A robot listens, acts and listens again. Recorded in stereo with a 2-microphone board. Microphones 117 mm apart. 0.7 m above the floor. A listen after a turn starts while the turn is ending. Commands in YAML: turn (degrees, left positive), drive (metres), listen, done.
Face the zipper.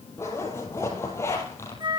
turn: 20
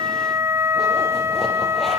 listen: true
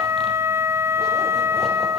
listen: true
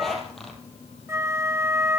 done: "Found it: a zipper, straight ahead."